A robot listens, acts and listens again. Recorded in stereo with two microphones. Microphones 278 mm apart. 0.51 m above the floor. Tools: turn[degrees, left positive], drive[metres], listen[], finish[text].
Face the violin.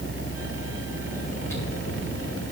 Action: listen[]
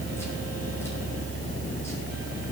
Action: listen[]
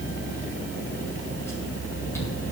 Action: finish[I can't make out a violin to turn to.]